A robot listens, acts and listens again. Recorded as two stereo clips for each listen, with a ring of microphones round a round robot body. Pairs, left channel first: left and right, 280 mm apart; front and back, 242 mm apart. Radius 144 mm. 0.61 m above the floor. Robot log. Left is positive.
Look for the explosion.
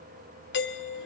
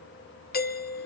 cmd idle
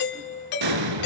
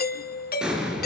note: The explosion: 95° right.
cmd yaw -95
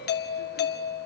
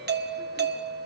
end: Facing where the explosion came from. I can't hear it now.